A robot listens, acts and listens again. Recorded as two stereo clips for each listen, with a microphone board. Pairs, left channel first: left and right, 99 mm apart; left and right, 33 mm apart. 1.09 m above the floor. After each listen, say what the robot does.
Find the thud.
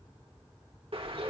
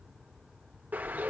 Keep listening.
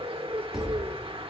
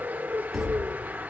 Turn 30° right.
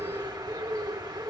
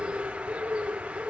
Keep listening.
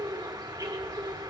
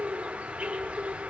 I heard a thud, but can't make it out now. It was about 25° left or 145° right.